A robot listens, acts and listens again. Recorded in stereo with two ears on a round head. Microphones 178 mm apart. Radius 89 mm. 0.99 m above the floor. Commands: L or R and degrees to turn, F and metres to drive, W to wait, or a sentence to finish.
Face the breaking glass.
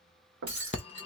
R25
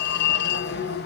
W
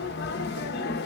I heard breaking glass, but can't make it out now. It was about straight ahead or 130° right.